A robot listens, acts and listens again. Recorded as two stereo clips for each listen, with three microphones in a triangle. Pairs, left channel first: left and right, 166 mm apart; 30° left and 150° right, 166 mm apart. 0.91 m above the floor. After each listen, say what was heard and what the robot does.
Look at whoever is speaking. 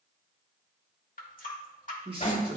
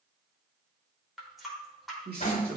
The man speaking: 145° right. Turn 145° right.
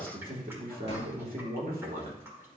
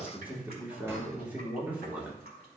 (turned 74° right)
The man speaking is now 70° right. Turn 70° right.
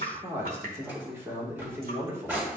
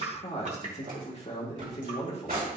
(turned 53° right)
The man speaking is now 15° right. Turn 15° right.
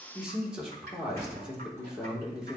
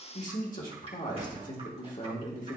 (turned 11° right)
Facing the man speaking.